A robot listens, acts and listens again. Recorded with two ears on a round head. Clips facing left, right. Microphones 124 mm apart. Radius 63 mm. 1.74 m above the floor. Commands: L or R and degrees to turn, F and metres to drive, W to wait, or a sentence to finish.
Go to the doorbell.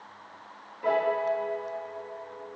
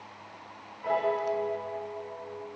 W
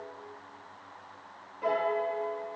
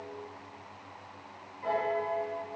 W
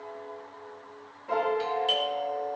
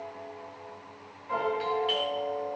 L45
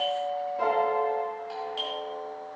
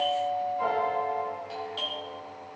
F1.0
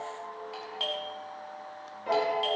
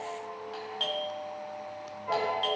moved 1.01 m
F1.0
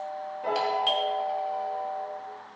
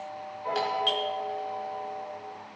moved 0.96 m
F1.0
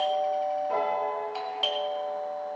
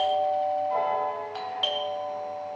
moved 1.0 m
F1.0
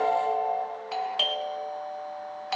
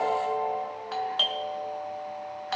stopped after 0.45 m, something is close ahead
L10
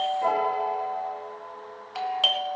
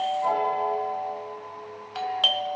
Arrived at the doorbell, straight ahead.